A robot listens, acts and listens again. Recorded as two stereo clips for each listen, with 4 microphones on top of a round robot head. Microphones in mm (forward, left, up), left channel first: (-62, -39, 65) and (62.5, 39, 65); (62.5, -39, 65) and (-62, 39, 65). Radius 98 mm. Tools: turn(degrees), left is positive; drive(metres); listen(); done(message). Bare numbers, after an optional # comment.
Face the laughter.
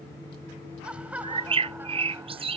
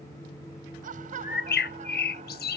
# The laughter: 115° left.
turn(115)
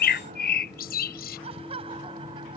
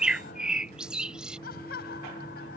# The laughter is now 20° right.
turn(-20)
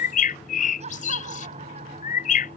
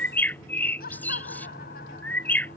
# The laughter is now 15° right.
turn(-15)
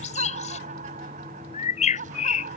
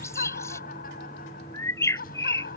done("Found it: laughter, straight ahead.")